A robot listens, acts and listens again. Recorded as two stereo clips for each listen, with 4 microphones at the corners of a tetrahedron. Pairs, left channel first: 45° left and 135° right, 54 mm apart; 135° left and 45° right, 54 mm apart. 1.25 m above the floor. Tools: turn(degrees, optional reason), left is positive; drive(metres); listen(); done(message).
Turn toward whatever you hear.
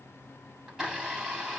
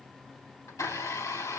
turn(degrees=150, reason="The blender: 150° left.")
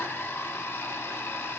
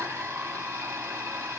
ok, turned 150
done("Facing the blender.")